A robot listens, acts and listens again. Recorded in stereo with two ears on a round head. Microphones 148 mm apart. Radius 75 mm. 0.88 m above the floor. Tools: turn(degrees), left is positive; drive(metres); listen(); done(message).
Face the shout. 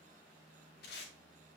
listen()
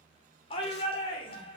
turn(degrees=35)
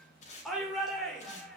done("Facing the shout.")